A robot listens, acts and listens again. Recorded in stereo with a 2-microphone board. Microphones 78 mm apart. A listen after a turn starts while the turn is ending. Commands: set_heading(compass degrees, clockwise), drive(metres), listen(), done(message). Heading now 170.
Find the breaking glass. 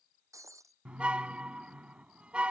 set_heading(210)
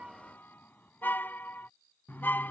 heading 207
listen()
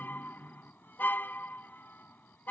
done("I heard breaking glass, but can't make it out now. It was about 5° right or 105° right.")